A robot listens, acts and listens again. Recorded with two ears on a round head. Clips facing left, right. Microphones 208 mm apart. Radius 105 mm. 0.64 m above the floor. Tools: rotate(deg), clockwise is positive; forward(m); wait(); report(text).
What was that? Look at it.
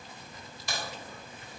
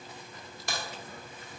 rotate(40)
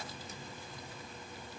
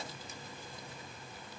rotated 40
wait()
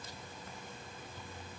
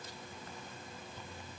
report("I heard a crack, but can't make it out now. It was about straight ahead or 100° right.")